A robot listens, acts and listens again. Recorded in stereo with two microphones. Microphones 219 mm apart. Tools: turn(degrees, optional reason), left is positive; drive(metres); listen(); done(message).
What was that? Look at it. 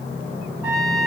turn(degrees=-30)
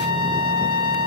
turn(degrees=-145, reason="So it is at 145° right.")
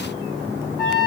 done("Facing the trumpet.")